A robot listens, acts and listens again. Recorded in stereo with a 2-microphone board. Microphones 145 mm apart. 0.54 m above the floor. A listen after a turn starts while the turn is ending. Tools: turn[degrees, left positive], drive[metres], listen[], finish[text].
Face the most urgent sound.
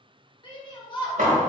Thought: The shout: about 35° left or 145° left.
Action: turn[35]
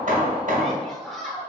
Action: finish[Facing the shout, 1 to 2 m away.]